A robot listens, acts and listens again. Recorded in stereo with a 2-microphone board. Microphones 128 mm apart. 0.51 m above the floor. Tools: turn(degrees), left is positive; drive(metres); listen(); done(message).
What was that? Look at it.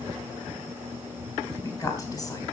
turn(degrees=30)
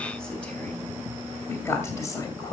turn(degrees=30)
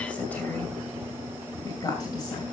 turn(degrees=35)
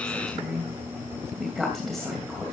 done("Found it: a woman speaking, straight ahead, 2 to 4 m away.")